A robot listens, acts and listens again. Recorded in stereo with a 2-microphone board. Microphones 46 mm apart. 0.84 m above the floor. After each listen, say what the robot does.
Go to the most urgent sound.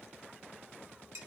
Keep listening.
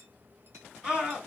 Turn 20° right.
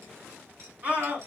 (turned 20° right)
Turn 140° right.
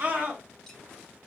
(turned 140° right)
Turn 40° right.
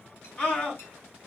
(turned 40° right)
Turn 25° left.
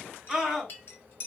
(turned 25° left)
Drive 1.0 m forward.
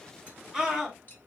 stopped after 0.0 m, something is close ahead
Something is in my way. I am facing the scream but have not reached it.